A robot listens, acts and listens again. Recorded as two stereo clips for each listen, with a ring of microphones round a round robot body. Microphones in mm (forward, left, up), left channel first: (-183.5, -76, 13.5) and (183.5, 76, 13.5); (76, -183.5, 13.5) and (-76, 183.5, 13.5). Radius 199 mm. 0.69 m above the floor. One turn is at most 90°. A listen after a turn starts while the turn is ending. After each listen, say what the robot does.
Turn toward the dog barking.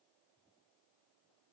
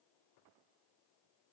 Keep listening.
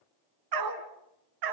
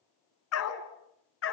Turn 10° right.
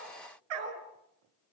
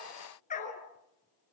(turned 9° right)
Found it: a dog barking, straight ahead.